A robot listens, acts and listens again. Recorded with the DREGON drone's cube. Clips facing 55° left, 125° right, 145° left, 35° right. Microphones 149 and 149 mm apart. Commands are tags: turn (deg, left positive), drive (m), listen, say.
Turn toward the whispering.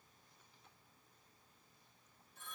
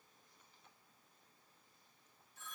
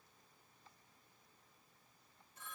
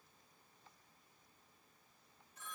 <listen/>
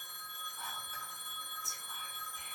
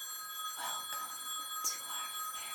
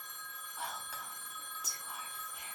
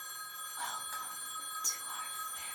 <turn deg="-130"/>
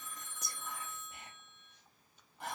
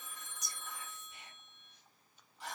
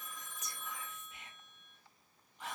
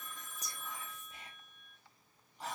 <turn deg="20"/>
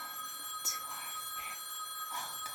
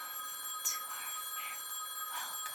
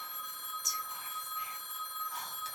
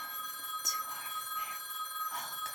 <say>Found it: whispering, straight ahead.</say>